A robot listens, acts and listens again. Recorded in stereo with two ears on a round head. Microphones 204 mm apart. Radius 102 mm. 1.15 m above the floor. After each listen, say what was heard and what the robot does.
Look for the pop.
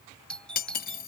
Keep listening.
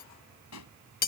Turn 90° left.
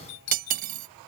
I heard a pop from this way, but can't make it out now.